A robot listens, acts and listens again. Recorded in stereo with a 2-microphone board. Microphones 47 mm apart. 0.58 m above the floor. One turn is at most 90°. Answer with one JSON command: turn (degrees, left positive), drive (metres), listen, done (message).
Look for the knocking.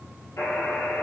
{"listen": true}
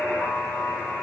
{"listen": true}
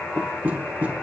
{"turn": -30}
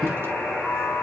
{"listen": true}
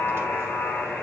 {"listen": true}
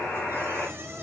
{"turn": -90}
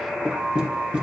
{"turn": -20}
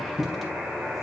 {"done": "Found it: knocking, straight ahead."}